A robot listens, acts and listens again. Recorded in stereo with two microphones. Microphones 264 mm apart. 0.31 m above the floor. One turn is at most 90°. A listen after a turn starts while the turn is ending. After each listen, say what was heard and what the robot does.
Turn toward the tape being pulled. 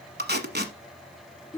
The tape being pulled: about 40° right or 140° right. Turn 40° right.
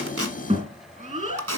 So it is at 100° right. Turn 90° right.
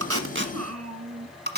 The tape being pulled is now 40° right. Turn 40° right.
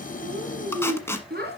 The tape being pulled is now 10° left. Turn 10° left.
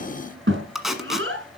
Facing the tape being pulled, 1 to 2 m away.